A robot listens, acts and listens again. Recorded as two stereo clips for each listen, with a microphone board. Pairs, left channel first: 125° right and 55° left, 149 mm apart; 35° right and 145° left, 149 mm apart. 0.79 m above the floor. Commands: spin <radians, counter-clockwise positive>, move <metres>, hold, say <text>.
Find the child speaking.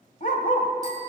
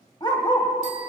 hold
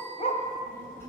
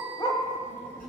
spin -0.87
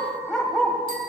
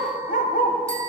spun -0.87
hold
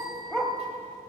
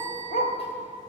hold
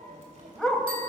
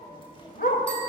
spin 0.35
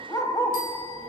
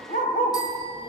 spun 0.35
spin 0.35
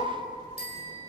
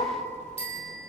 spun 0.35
say Facing the child speaking.